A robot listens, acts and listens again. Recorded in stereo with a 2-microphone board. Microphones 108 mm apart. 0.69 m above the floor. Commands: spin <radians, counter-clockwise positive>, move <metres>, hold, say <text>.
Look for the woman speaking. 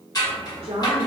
spin -1.22
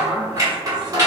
say Facing the woman speaking.